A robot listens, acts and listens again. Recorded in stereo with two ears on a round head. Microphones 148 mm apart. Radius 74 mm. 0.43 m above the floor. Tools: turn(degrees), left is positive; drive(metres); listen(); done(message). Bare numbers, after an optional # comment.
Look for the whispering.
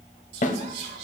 # The whispering: about 75° right or 105° right.
turn(-75)
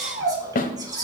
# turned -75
# So it is at 25° right.
turn(-25)
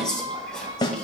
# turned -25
done("Found it: whispering, straight ahead.")